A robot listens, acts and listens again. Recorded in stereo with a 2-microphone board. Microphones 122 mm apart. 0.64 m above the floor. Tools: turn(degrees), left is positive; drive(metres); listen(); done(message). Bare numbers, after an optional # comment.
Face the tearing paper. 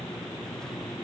listen()
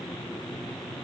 listen()
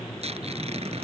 # The tearing paper: about 55° right or 125° right.
turn(-55)
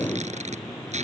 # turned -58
# So it is at 70° right.
turn(-70)
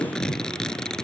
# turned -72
done("Facing the tearing paper.")